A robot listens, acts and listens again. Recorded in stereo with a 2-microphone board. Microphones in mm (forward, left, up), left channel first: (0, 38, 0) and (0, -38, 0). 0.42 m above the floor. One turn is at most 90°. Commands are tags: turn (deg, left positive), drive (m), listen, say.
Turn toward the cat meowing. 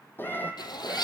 <turn deg="25"/>
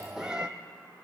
<turn deg="-10"/>
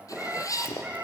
<turn deg="-15"/>
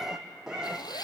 <turn deg="-10"/>
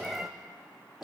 <say>Found it: a cat meowing, straight ahead.</say>